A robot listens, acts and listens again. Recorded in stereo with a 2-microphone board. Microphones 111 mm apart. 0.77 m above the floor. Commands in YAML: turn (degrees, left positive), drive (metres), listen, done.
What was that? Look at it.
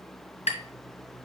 turn: 75
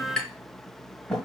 done: "Facing the tapping, 1 to 2 m away."